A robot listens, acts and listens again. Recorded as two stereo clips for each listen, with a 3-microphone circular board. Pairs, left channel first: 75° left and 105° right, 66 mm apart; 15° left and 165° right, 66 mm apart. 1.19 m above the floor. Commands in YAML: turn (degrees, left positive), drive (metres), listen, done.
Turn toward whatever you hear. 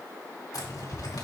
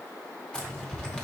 turn: 90
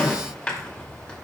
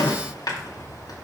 done: "Facing the zipper, 2 to 4 m away."